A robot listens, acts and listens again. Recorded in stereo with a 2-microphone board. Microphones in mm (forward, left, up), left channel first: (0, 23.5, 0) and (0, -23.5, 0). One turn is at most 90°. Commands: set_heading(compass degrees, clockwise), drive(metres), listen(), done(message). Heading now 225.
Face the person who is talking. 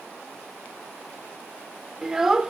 set_heading(255)
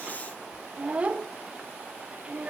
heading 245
set_heading(335)
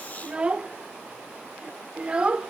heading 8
set_heading(33)
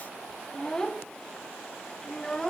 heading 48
set_heading(33)
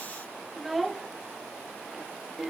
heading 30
done("Facing the child speaking, under 1 m away.")